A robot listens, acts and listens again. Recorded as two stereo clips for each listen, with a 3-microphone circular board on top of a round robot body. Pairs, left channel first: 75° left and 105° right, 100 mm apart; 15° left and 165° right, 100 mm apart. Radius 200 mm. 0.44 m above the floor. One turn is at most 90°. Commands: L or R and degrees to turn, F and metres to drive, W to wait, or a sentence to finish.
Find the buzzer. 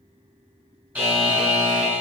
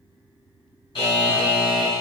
R30
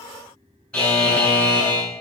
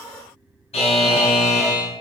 Found it: a buzzer, straight ahead.